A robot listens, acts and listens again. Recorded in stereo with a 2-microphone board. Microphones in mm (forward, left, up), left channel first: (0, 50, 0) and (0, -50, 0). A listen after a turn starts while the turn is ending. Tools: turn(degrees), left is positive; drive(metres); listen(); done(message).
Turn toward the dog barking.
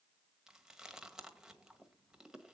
listen()
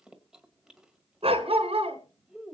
turn(degrees=-90)
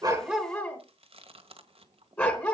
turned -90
turn(degrees=15)
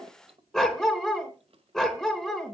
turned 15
done("Facing the dog barking.")